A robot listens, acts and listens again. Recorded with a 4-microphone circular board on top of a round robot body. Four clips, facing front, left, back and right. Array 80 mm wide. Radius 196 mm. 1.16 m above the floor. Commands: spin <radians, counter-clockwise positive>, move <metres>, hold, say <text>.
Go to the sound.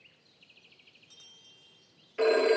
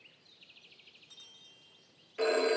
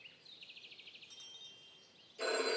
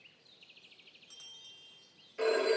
move 1.0
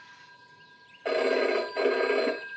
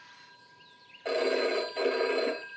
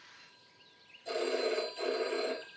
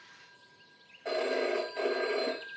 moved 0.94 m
spin 0.17
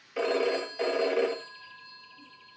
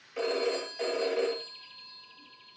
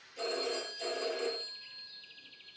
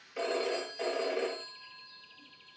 move 1.0
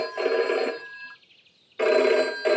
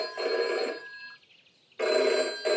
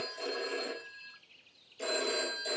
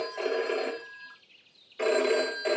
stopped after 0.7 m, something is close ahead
say I am next to the phone ringing.